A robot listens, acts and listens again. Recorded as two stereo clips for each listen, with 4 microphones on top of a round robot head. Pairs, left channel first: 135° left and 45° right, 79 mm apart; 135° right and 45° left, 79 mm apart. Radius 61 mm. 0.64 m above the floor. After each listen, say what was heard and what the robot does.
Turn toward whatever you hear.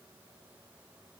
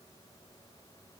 Keep listening.
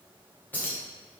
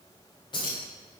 The keys jangling: 155° right. Turn 155° right.
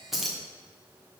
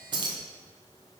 The keys jangling is now 45° left. Turn 45° left.
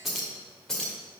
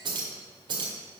The keys jangling is now 50° left. Turn 50° left.
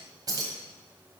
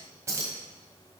The keys jangling is now 10° right. Turn 10° right.
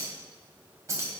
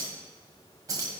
Found it: keys jangling, straight ahead.